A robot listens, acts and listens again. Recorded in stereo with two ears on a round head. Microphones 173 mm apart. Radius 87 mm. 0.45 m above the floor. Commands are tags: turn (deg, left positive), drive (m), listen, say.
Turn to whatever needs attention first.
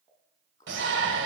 <turn deg="-65"/>
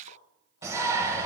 <turn deg="-15"/>
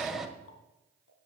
<say>Found it: a shout, straight ahead, 1 to 2 m away.</say>